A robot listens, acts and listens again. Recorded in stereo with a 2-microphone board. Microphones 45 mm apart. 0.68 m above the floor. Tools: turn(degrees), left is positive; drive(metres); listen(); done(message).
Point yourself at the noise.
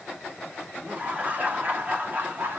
turn(degrees=-45)
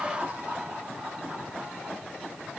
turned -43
turn(degrees=-30)
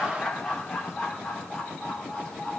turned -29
turn(degrees=20)
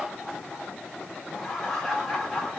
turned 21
done("Facing the laughter, 2 to 4 m away.")